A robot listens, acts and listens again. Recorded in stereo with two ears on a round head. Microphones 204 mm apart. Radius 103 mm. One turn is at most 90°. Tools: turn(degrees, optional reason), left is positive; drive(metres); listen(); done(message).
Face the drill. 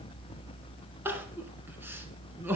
listen()
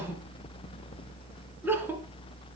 listen()
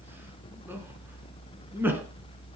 done("I can't make out a drill, only crying.")